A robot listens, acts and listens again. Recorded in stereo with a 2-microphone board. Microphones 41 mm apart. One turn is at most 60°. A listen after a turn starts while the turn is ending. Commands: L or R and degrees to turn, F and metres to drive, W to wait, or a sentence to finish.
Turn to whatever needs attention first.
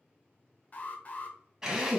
L45
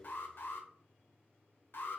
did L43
L60
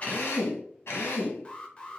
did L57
L25
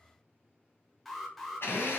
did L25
Found it: an alarm, straight ahead.